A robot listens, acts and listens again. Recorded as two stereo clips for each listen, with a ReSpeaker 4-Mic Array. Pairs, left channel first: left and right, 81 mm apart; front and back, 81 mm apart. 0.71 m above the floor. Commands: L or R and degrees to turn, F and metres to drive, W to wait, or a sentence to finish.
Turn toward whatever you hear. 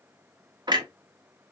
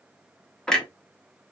R80
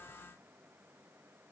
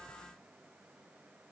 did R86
Facing where the clunk came from. I can't hear it now.